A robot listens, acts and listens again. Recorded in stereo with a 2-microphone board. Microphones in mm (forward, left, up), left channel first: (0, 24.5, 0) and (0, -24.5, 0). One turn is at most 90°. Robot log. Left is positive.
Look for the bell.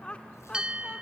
note: The bell: about 15° right or 165° right.
cmd yaw -15
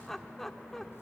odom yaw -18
cmd idle
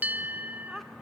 note: So it is at 150° right.
cmd yaw -90
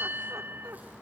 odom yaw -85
note: The bell is now 55° right.
cmd yaw -55
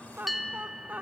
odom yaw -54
end: Facing the bell, 1 to 2 m away.